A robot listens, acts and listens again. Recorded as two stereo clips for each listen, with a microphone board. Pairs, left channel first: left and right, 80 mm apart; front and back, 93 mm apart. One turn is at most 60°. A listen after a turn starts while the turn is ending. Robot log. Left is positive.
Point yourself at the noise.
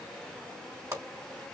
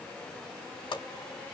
note: The pop: 30° right.
cmd yaw -30
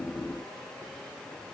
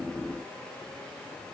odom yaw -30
end: Facing where the pop came from. I can't hear it now.